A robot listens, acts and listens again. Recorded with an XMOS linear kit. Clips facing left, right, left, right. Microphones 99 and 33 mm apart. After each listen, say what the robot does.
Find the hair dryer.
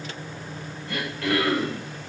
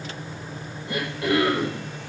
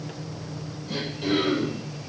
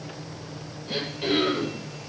Keep listening.
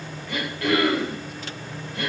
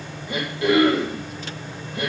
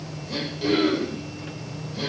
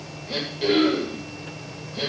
Keep listening.
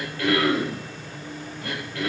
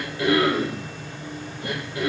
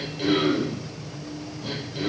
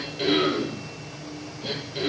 I can't make out a hair dryer, only throat clearing.